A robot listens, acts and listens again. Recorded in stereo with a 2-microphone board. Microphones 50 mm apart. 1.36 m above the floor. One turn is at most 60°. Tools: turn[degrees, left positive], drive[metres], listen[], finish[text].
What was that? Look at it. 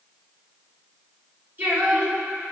Thought: The singing: about 40° right or 140° right.
Action: turn[-40]
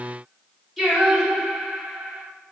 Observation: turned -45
Action: finish[Facing the singing, 2 to 4 m away.]